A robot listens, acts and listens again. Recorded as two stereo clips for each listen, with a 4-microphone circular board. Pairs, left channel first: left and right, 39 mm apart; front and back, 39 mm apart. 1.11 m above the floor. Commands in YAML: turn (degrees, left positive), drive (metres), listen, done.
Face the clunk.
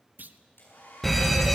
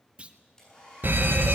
turn: -120
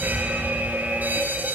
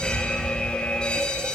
done: "I heard a clunk from this way, but can't make it out now."